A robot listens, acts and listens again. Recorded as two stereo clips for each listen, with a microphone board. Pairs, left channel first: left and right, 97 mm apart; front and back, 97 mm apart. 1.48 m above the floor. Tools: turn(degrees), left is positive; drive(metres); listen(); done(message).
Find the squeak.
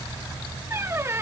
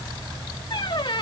turn(degrees=-30)
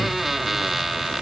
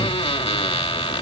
done("Facing the squeak.")